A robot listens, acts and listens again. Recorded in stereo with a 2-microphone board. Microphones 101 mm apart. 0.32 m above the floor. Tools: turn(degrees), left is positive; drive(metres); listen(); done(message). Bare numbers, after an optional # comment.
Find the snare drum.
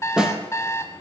turn(-30)
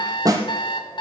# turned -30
# So it is at 145° right.
turn(-145)
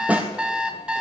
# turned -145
# The snare drum is now 15° right.
turn(-15)
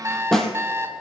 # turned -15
done("Found it: a snare drum, straight ahead, 1 to 2 m away.")